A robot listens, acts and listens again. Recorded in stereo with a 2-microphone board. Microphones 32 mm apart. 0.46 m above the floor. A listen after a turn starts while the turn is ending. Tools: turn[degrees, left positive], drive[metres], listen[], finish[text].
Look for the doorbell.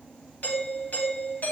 Thought: The doorbell: about 60° left or 120° left.
Action: turn[60]
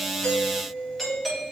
Action: finish[Found it: a doorbell, straight ahead.]